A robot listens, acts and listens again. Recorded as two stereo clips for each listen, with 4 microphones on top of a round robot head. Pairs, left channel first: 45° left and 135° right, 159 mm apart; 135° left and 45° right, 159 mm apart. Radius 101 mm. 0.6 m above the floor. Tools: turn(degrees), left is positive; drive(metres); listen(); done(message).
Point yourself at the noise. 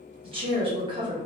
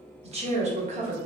turn(degrees=-75)
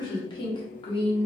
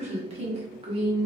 done("Found it: a woman speaking, straight ahead, 1 to 2 m away.")